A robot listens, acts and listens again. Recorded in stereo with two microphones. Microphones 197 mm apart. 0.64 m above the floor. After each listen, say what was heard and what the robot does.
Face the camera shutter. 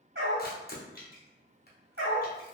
The camera shutter: about 50° left or 130° left. Turn 50° left.
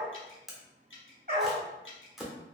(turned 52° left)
Facing the camera shutter.